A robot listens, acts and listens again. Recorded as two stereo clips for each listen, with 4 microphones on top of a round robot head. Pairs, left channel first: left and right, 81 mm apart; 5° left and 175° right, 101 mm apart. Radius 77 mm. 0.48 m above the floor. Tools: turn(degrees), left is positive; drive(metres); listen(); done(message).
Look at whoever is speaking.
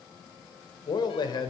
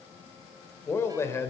turn(degrees=65)
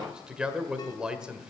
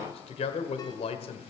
turn(degrees=-10)
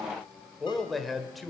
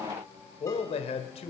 done("Found it: a man speaking, straight ahead, 1 to 2 m away.")